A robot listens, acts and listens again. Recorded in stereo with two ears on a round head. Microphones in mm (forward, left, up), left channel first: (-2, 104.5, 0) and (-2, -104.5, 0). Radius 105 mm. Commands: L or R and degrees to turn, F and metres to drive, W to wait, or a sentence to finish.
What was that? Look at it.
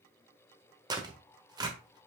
R20
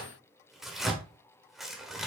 Facing the tearing paper.